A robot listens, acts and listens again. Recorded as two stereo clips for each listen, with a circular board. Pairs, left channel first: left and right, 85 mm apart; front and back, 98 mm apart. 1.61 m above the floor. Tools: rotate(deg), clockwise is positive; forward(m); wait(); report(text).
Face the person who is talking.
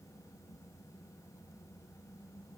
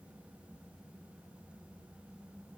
wait()
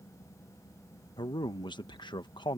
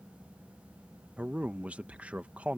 rotate(-105)
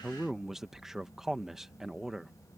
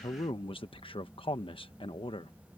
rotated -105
report("Found it: a man speaking, straight ahead.")